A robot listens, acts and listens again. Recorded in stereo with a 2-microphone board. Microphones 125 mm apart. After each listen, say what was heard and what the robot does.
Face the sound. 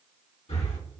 The breathing: about 60° left or 120° left. Turn 60° left.
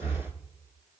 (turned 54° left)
So it is at 60° left. Turn 60° left.
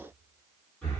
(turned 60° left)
Found it: breathing, straight ahead.